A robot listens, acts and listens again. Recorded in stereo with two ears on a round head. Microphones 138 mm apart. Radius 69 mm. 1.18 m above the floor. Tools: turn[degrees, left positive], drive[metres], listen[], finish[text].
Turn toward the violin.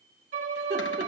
Thought: The violin: about 60° right or 120° right.
Action: turn[-60]
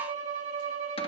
Thought: So it is at 55° right.
Action: turn[-55]
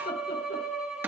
Action: finish[Facing the violin.]